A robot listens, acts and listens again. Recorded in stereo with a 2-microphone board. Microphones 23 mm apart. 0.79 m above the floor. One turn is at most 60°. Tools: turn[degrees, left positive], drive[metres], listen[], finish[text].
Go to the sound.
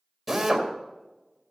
Action: turn[-30]
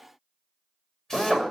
Thought: So it is at 20° left.
Action: turn[20]
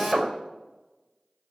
Thought: The drill is now 10° left.
Action: turn[10]
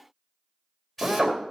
Action: drive[1.0]
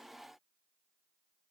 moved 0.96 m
Action: listen[]
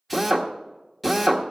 Action: drive[1.0]
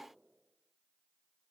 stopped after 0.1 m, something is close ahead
Action: listen[]
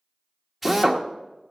Thought: The drill is now 10° right.
Action: turn[-10]
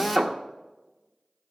Action: finish[I am next to the drill.]